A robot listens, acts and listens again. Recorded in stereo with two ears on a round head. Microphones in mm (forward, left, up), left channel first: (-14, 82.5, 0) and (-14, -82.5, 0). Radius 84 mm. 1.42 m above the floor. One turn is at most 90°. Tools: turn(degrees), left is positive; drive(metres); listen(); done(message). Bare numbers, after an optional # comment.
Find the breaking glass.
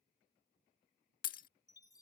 # The breaking glass: about 50° left or 130° left.
turn(50)
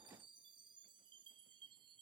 listen()
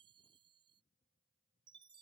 done("I heard breaking glass, but can't make it out now. It was about straight ahead or 80° left.")